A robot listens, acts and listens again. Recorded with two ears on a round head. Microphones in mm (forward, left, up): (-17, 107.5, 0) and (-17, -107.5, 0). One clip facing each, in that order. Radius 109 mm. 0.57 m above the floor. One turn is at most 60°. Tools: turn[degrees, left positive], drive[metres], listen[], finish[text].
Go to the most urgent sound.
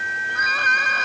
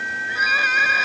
Action: turn[-30]
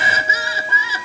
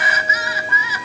Thought: So it is at 25° left.
Action: turn[25]
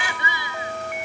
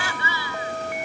Thought: The crying is now 15° left.
Action: turn[15]
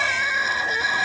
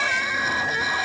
Action: drive[1.0]
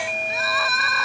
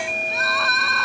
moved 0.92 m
Action: drive[1.0]
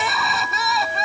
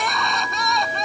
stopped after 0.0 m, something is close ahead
Action: finish[Something is in my way. I am facing the crying but have not reached it.]